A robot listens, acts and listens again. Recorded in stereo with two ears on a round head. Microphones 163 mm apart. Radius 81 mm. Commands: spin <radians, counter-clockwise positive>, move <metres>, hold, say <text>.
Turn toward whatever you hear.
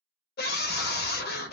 spin 0.96
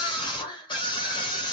spin 0.52
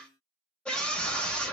say Found it: a scream, straight ahead.